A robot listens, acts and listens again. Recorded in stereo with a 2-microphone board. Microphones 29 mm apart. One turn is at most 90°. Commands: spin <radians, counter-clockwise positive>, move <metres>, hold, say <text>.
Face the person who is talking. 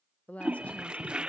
spin 1.22
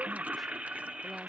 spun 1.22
hold
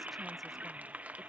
hold
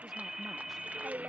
say I heard a woman speaking, but can't make it out now. It was about straight ahead or 40° left.